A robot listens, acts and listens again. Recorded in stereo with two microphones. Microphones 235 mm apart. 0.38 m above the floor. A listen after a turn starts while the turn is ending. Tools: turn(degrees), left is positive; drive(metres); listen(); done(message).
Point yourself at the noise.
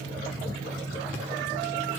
listen()
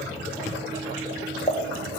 turn(degrees=25)
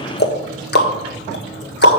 turn(degrees=130)
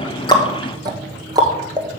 turn(degrees=-15)
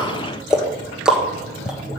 done("Facing the ticking, 1 to 2 m away.")